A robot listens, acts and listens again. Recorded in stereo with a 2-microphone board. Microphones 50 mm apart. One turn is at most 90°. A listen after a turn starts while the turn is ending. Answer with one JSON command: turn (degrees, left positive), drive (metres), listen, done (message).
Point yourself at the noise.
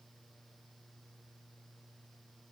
{"listen": true}
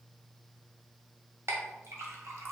{"turn": -75}
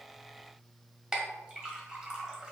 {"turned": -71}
{"turn": -20}
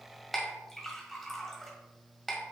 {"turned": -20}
{"done": "Found it: a clink, straight ahead, 1 to 2 m away."}